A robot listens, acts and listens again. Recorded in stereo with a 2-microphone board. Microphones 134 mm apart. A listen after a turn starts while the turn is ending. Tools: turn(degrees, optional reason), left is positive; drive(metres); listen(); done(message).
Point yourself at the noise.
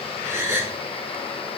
turn(degrees=-15, reason="The gasp: about 15° right or 165° right.")
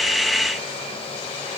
listen()
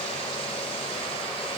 done("I heard a gasp, but can't make it out now. It was about straight ahead or 150° right.")